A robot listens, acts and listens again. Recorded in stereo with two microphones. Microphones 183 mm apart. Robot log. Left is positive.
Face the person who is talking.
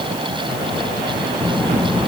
cmd yaw +30
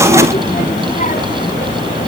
note: So it is at 135° left.
cmd yaw +135
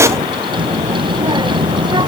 note: The child speaking is now 25° right.
cmd yaw -25
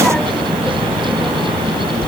end: Found it: a child speaking, straight ahead.